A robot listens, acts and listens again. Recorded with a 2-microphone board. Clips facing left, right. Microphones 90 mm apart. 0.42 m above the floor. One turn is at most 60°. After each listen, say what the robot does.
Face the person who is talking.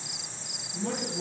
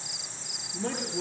Turn 60° right.
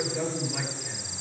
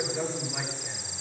Turn 10° right.
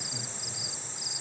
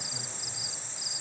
Keep listening.
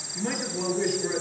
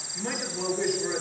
Facing the man speaking.